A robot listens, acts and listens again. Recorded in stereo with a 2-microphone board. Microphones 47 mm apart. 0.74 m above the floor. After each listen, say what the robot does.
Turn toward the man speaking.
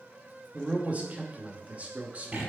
Turn 30° right.
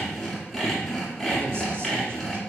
Keep listening.
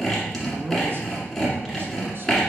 Keep listening.
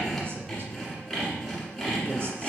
I heard a man speaking, but can't make it out now. It was about straight ahead or 120° right.